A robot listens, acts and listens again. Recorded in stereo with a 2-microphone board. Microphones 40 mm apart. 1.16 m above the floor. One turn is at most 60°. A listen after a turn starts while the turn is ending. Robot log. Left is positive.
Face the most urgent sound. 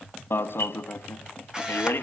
note: The alarm: about 70° left or 110° left.
cmd yaw +60
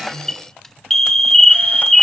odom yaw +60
note: So it is at 10° left.
cmd yaw +10
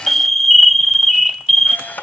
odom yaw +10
end: Found it: an alarm, straight ahead.